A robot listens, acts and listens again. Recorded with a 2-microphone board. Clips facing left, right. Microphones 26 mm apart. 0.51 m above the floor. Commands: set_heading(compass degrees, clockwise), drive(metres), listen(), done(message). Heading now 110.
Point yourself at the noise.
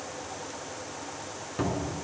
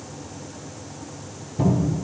set_heading(20)
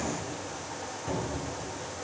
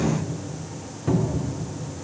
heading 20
set_heading(30)
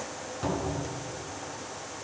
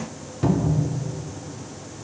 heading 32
done("Found it: a cupboard door, straight ahead.")